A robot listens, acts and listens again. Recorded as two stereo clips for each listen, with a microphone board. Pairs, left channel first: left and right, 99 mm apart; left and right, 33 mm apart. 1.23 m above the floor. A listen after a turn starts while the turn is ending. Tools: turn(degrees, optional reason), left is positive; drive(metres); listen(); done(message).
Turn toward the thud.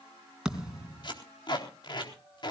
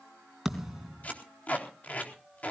turn(degrees=-30)
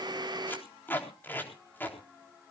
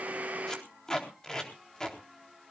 listen()
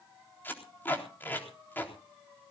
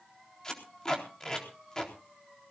done("I heard a thud, but can't make it out now. It was about 25° left or 145° right.")